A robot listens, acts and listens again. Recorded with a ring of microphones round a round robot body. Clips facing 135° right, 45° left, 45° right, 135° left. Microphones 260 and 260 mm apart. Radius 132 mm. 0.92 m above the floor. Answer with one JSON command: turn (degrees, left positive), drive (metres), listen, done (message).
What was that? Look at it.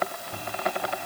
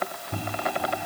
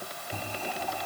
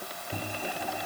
{"turn": 55}
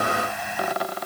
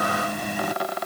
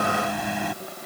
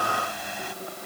{"turn": -10}
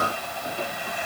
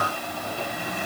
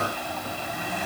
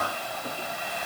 {"done": "Found it: a microwave, straight ahead."}